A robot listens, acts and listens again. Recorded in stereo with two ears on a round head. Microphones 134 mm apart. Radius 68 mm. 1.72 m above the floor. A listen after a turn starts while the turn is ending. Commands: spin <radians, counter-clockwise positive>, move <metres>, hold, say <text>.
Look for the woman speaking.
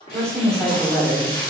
spin 0.26
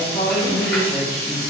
spin 0.52
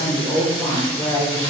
spin 0.52
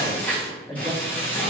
spin 0.35
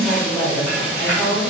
spin 0.52
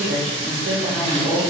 spin -0.35
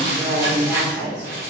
say Found it: a woman speaking, straight ahead, 2 to 4 m away.